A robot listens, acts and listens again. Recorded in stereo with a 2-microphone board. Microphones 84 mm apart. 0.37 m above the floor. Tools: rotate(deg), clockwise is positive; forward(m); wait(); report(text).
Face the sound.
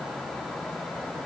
wait()
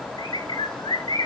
rotate(-75)
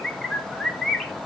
report("Found it: a bird, straight ahead.")